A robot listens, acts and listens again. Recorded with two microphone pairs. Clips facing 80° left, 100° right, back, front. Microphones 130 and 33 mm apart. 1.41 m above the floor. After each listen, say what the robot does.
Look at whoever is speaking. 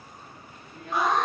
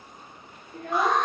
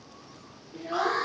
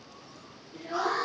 Turn 115° right.
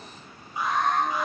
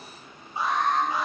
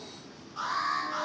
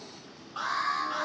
Keep listening.
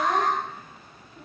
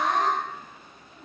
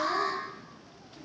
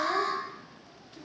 Keep listening.
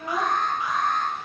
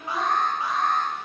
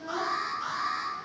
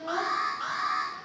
Turn 35° left.
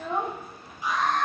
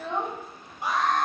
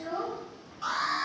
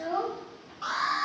Found it: a child speaking, straight ahead.